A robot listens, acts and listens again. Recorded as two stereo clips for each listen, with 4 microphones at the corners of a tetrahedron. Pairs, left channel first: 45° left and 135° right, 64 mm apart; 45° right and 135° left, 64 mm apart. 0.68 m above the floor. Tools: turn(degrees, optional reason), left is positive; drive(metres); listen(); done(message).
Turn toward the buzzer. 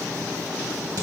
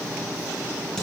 listen()
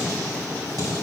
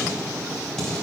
listen()
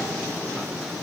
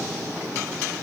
done("I can't make out a buzzer to turn to.")